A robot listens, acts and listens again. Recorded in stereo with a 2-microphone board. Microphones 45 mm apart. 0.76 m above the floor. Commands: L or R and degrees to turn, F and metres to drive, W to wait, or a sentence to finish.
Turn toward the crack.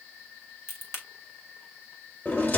L60
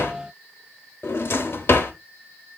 W
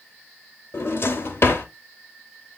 I heard a crack, but can't make it out now. It was about straight ahead or 60° left.